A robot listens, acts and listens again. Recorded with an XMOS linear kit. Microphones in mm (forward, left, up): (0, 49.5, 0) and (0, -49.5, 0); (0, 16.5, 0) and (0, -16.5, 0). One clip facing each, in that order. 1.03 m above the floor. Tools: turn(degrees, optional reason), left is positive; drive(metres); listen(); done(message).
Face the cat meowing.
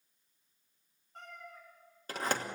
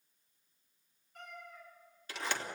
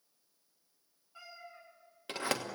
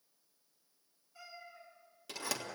turn(degrees=35, reason="The cat meowing: about 35° left or 145° left.")
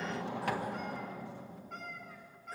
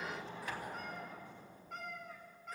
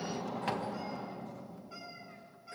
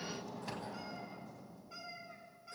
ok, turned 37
done("Found it: a cat meowing, straight ahead.")